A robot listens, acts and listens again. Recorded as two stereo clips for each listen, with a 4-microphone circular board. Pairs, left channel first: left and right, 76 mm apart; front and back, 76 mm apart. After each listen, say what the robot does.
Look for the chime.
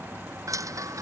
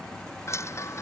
Turn 50° right.
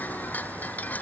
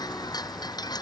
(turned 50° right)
Turn 20° left.
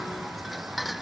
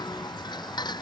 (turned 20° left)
Facing the chime.